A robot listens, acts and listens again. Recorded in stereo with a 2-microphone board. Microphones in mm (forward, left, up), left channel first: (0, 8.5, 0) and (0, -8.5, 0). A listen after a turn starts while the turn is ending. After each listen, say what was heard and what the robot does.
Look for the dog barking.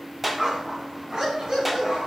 The dog barking: about 45° right or 135° right. Turn 45° right.
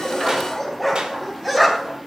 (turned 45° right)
So it is at 10° right. Turn 10° right.
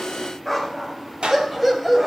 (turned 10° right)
The dog barking is now 15° right. Turn 15° right.
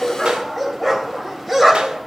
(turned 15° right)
The dog barking is now 10° right. Turn 10° right.
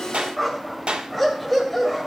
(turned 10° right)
Found it: a dog barking, straight ahead, 2 to 4 m away.